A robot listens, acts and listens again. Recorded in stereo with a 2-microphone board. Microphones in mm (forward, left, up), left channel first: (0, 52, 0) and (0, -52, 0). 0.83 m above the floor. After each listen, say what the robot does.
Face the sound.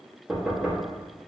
Turn 30° right.
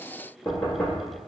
Turn 30° left.
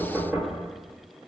Turn 15° right.
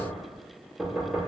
Found it: knocking, straight ahead, under 1 m away.